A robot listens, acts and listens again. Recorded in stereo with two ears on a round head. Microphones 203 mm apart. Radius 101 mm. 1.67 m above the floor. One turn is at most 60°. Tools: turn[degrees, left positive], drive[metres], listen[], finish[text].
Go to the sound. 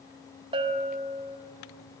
Thought: The bell: about 25° right or 155° right.
Action: turn[-25]
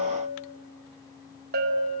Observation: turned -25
Thought: So it is at 130° right.
Action: turn[-60]
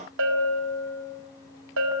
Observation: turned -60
Thought: The bell is now 70° right.
Action: turn[-60]
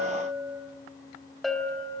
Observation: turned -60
Action: drive[1.0]
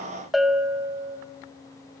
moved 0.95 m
Action: drive[1.0]
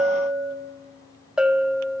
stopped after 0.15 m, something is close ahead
Action: finish[Arrived at the bell, straight ahead.]